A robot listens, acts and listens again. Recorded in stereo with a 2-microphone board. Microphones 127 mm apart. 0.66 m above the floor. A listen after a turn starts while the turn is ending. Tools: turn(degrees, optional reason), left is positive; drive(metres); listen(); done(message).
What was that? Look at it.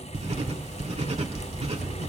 turn(degrees=-55, reason="The writing: about 55° right or 125° right.")
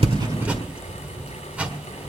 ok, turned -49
turn(degrees=-10, reason="So it is at 10° right.")
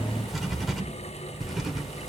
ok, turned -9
done("Found it: writing, straight ahead.")